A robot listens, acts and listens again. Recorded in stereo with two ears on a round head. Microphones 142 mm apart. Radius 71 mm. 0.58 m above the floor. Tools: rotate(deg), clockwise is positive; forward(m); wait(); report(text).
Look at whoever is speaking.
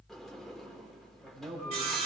rotate(30)
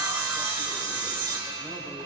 wait()
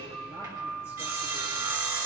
wait()
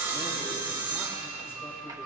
report("I heard a man speaking, but can't make it out now. It was about 20° left or 140° right.")